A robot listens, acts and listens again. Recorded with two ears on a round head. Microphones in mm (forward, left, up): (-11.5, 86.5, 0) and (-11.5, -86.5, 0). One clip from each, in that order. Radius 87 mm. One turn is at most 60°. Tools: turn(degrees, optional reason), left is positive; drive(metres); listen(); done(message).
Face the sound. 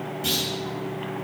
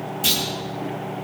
turn(degrees=-45, reason="The clunk: about 45° right or 135° right.")
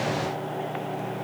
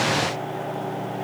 listen()
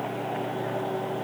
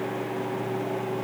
done("I heard a clunk, but can't make it out now. It was about straight ahead or 90° right.")